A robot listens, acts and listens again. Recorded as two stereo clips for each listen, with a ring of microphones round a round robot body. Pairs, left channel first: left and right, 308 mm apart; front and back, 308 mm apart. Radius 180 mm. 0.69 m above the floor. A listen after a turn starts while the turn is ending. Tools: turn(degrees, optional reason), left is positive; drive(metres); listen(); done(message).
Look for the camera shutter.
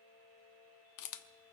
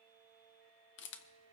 turn(degrees=55, reason="The camera shutter: 55° left.")
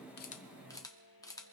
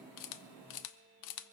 turn(degrees=10, reason="The camera shutter is now 10° left.")
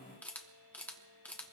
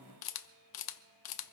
done("Found it: a camera shutter, straight ahead, under 1 m away.")